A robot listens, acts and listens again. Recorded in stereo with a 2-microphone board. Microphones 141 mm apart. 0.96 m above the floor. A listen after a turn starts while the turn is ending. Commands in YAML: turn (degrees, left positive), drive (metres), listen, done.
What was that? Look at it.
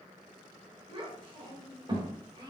turn: -30
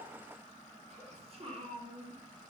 turn: -35
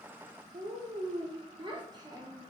turn: -25
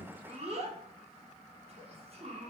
turn: -45
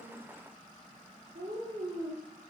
turn: -80
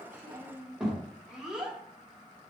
done: "Facing the child speaking."